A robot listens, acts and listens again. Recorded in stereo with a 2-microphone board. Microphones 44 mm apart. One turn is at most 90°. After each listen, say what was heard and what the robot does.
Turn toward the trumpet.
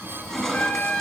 The trumpet: about 40° left or 140° left. Turn 40° left.
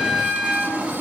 Facing the trumpet, 1 to 2 m away.